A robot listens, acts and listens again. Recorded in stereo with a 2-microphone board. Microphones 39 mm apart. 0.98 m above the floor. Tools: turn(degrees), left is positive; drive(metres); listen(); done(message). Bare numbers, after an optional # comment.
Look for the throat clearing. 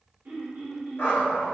# The throat clearing: about 60° right or 120° right.
turn(-60)
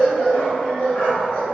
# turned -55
listen()
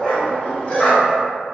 listen()
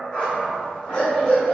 done("I heard throat clearing, but can't make it out now. It was about 5° right or 65° right.")